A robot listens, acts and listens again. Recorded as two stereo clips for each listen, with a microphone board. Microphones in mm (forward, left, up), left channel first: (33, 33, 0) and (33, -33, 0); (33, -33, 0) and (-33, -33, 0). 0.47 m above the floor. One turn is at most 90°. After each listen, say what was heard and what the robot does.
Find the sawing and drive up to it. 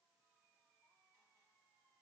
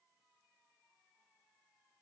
Keep listening.
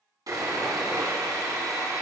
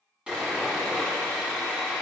The sawing: 105° right. Turn 90° right.
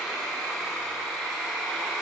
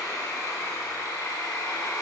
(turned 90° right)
The sawing is now 10° right. Turn 10° right.
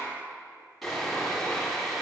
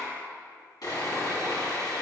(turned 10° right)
Drive 1.0 m forward.
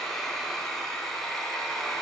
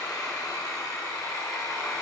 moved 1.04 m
Drive 1.0 m forward.
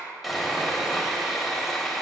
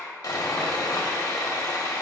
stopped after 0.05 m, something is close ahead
I am next to the sawing.